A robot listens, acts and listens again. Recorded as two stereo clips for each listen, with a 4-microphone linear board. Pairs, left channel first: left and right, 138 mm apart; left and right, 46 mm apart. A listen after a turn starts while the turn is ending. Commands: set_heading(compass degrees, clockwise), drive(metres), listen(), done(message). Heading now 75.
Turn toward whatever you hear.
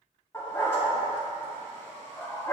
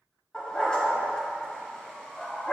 set_heading(55)
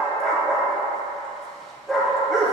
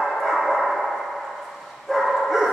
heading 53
done("Facing the dog barking.")